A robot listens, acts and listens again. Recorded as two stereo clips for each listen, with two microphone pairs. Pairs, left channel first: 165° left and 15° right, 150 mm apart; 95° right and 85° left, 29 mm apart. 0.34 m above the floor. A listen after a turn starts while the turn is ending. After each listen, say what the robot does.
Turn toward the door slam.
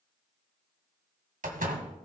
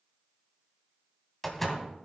Turn 15° right.
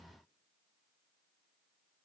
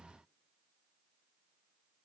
I heard a door slam from this way, but can't make it out now.